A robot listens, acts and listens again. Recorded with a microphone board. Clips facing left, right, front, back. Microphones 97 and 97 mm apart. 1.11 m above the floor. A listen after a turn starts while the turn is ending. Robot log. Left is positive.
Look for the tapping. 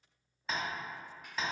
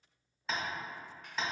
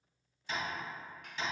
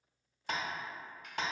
note: The tapping: 175° left.
cmd yaw +175
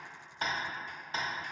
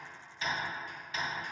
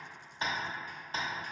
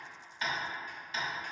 note: The tapping is now 40° left.
cmd yaw +40
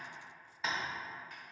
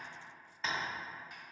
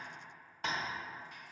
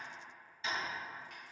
end: Facing the tapping.